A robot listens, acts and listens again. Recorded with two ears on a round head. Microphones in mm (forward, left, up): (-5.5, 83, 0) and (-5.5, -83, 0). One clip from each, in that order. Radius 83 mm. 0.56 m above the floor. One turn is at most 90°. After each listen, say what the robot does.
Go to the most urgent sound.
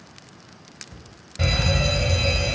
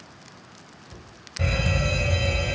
Turn 25° left.
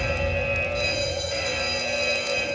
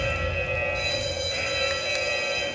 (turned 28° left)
Drive 1.0 m forward.
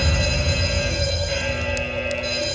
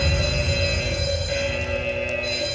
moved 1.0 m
Turn 10° left.
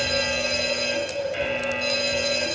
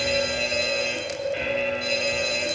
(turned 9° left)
Drive 1.0 m forward.
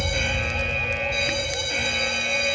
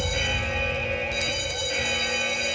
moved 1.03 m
Drive 1.0 m forward.
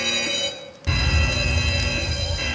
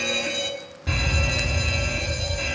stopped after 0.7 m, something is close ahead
I am next to the fire alarm.